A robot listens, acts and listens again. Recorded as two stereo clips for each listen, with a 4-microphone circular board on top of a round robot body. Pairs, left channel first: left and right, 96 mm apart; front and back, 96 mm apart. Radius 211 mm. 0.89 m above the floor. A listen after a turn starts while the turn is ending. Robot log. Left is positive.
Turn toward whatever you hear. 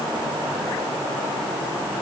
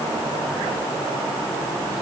cmd idle
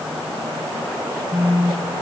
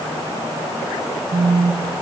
note: The phone buzzing: 155° left.
cmd yaw +155
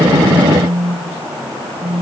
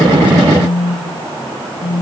note: The phone buzzing is now 10° right.
cmd yaw -10
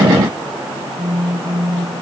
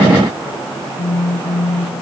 end: Facing the phone buzzing.